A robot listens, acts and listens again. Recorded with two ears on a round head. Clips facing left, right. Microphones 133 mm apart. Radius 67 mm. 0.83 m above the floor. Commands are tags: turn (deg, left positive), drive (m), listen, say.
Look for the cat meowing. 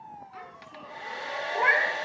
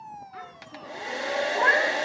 <turn deg="20"/>
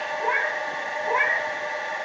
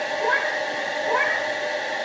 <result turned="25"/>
<turn deg="15"/>
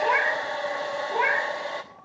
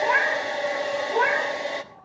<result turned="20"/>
<turn deg="20"/>
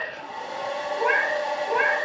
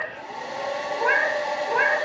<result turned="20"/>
<turn deg="30"/>
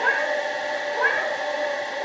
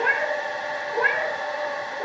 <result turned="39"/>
<turn deg="-25"/>
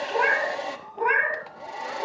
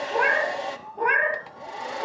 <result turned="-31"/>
<say>Found it: a cat meowing, straight ahead, 2 to 4 m away.</say>